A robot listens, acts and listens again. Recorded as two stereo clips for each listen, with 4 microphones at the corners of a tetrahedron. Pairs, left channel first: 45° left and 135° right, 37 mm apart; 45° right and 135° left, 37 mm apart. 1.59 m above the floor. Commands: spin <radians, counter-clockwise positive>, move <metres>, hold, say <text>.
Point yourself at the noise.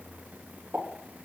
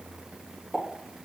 spin -2.18
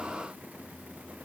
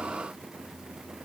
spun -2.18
say Facing where the pop came from. I can't hear it now.